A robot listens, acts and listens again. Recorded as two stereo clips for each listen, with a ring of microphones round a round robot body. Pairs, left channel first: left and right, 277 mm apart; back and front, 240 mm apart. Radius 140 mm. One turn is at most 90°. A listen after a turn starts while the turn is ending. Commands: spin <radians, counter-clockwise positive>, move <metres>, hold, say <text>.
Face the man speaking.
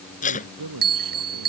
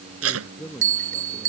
spin -1.57
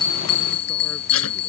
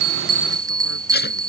spin -0.17
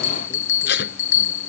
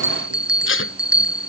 hold
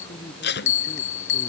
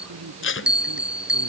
spin 0.26
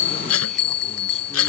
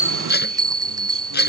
hold
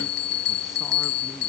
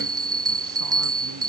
hold
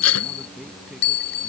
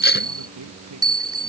say Found it: a man speaking, straight ahead.